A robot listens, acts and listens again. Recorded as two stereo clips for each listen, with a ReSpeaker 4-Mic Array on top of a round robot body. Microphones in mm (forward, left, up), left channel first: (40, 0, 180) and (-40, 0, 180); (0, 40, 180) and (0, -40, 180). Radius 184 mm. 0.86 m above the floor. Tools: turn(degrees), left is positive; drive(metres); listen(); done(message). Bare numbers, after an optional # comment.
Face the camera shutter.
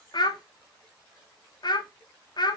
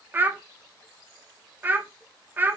listen()
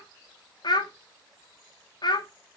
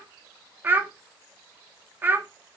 listen()
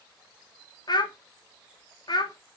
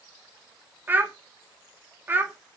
done("I can't make out a camera shutter, only a child speaking.")